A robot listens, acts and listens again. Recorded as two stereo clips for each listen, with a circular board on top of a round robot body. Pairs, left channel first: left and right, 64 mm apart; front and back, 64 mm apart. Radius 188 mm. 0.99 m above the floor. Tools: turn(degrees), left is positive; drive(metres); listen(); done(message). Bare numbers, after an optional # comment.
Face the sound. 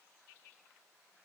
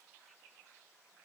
listen()
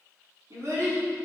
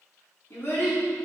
# The child speaking: 55° right.
turn(-55)
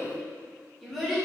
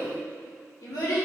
done("Found it: a child speaking, straight ahead.")